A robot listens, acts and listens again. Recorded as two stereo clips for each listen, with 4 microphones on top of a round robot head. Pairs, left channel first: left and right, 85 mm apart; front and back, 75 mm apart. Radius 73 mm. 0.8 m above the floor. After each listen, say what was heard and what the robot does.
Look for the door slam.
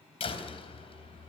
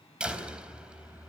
The door slam: 100° left. Turn 100° left.
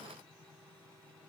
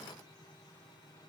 I heard a door slam from this way, but can't make it out now.